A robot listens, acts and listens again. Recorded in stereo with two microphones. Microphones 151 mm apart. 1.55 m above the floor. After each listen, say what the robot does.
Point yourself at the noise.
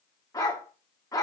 Turn 20° left.
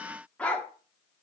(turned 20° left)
Turn 10° left.
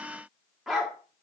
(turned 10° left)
Facing the dog barking, 1 to 2 m away.